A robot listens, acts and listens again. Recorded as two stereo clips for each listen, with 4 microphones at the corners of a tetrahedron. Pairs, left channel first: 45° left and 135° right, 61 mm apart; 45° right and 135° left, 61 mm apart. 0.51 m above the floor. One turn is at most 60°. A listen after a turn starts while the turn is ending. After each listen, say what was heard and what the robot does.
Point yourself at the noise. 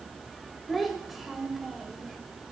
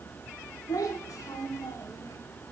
The child speaking: 50° right. Turn 50° right.
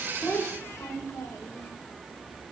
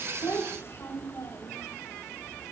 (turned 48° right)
Found it: a child speaking, straight ahead.